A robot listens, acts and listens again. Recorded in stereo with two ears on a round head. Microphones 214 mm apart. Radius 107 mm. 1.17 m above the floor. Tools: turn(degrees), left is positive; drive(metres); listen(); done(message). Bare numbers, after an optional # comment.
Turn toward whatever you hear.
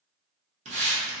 # The hiss: about 30° right or 150° right.
turn(-30)
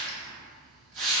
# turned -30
# So it is at 115° right.
turn(-115)
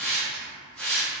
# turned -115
done("Found it: a hiss, straight ahead, under 1 m away.")